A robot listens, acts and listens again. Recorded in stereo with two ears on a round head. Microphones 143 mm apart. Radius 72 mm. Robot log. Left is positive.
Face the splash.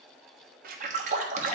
note: The splash: about 50° right or 130° right.
cmd yaw -50
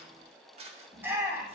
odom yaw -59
cmd idle
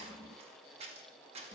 end: I heard a splash, but can't make it out now. It was about 10° left or 70° right.